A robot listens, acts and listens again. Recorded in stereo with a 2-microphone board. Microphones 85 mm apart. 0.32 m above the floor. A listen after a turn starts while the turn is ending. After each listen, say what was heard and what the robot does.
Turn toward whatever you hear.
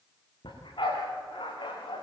The dog barking: about 70° left or 110° left. Turn 70° left.
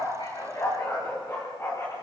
So it is at 35° left. Turn 35° left.
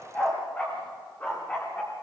The dog barking is now 20° left. Turn 20° left.
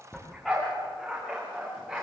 Found it: a dog barking, straight ahead, over 4 m away.